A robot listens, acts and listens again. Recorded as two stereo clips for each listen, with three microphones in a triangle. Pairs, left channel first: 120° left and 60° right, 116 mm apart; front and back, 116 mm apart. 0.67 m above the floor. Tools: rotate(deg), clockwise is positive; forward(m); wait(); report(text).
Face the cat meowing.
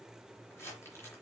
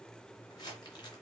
wait()
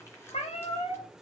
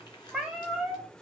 rotate(-95)
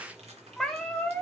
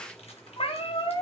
rotate(-40)
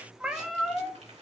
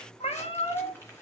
rotate(-35)
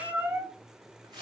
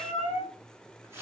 rotate(-20)
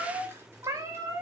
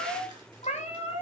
report("Facing the cat meowing, 1 to 2 m away.")